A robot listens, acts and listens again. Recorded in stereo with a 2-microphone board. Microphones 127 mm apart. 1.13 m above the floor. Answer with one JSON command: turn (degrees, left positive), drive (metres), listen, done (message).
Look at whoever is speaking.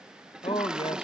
{"turn": 45}
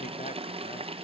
{"listen": true}
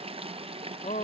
{"turn": 90}
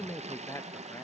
{"turn": 25}
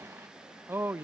{"turn": -20}
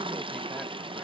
{"listen": true}
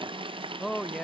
{"done": "Facing the man speaking."}